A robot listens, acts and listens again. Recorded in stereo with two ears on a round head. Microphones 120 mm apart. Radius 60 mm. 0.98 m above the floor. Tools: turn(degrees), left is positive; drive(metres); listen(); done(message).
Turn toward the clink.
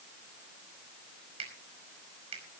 listen()
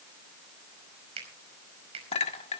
turn(degrees=50)
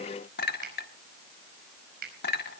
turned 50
turn(degrees=80)
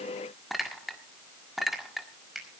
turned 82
done("Found it: a clink, straight ahead, 1 to 2 m away.")